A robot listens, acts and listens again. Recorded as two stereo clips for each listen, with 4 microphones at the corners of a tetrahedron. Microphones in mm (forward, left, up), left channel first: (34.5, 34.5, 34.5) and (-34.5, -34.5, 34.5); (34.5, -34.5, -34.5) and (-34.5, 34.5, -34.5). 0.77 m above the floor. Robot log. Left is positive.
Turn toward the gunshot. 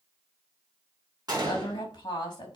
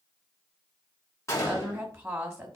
note: The gunshot: 95° right.
cmd yaw -95
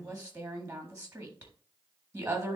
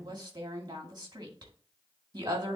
end: I heard a gunshot from this way, but can't make it out now.